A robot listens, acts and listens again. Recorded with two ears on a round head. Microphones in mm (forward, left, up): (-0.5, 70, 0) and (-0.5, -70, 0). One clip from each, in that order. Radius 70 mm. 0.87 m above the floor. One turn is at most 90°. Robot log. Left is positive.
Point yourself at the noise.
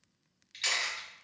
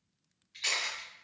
note: The camera shutter: about 45° left or 135° left.
cmd yaw +45
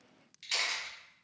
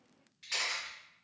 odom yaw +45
note: So it is at 95° left.
cmd yaw +90
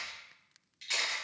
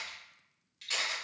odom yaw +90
note: The camera shutter is now 10° left.
cmd yaw +10
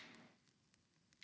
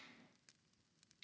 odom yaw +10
cmd idle
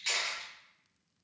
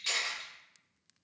end: Facing the camera shutter.